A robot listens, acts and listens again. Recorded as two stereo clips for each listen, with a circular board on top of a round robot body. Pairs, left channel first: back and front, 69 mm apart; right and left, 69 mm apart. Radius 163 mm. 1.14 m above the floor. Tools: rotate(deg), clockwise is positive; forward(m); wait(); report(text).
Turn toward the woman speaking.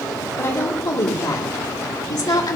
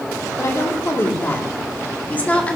rotate(160)
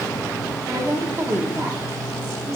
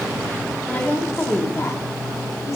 rotate(50)
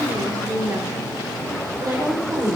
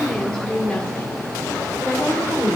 rotate(20)
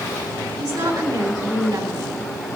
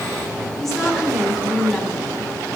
report("Found it: a woman speaking, straight ahead, 2 to 4 m away.")